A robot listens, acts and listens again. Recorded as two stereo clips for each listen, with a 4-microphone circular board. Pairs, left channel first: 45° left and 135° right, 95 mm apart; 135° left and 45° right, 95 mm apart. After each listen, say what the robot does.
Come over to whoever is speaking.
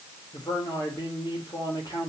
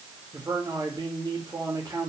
Drive 1.0 m forward.
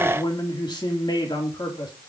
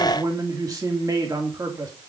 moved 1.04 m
Drive 1.0 m forward.
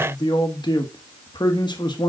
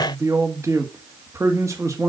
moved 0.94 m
Turn 10° left.
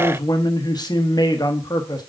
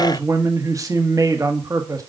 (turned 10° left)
Drive 1.0 m forward.
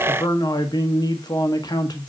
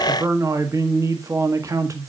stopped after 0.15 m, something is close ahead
Arrived at the man speaking, straight ahead.